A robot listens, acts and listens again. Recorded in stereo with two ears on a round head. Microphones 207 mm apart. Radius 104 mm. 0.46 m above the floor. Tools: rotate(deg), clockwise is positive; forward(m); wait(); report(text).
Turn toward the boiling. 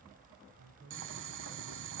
rotate(55)
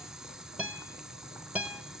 report("Facing the boiling.")